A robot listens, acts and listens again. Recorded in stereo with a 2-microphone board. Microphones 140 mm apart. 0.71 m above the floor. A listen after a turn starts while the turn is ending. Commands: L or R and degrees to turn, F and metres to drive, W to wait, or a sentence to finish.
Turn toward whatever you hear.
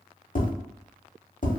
L60
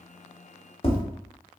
L45
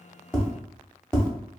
Found it: tapping, straight ahead.